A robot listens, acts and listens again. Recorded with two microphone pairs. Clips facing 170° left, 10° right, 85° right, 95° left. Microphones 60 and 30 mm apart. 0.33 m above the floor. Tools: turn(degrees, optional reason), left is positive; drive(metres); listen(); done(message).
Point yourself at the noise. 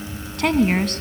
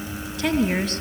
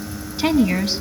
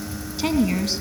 turn(degrees=-155, reason="The woman speaking: 155° right.")
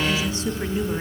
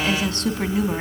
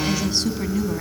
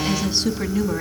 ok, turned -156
turn(degrees=15, reason="The woman speaking is now 15° left.")
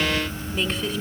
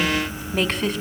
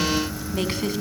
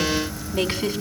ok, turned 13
turn(degrees=10, reason="The woman speaking is now 10° left.")
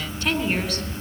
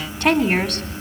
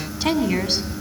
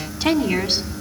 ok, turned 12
turn(degrees=10, reason="The woman speaking is now 10° left.")
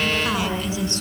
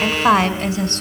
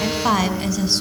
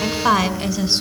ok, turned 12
turn(degrees=10, reason="The woman speaking is now 10° left.")
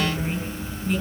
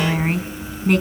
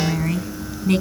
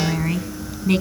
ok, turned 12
done("Found it: a woman speaking, straight ahead, 2 to 4 m away.")